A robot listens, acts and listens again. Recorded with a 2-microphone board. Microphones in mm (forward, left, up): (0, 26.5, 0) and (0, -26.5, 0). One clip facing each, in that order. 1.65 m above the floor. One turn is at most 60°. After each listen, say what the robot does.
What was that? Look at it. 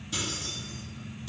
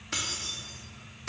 Turn 60° right.
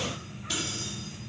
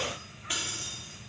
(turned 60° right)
Turn 25° right.
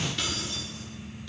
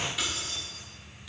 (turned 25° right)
Turn 10° right.
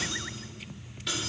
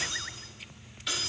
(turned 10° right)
Facing the keys jangling, 2 to 4 m away.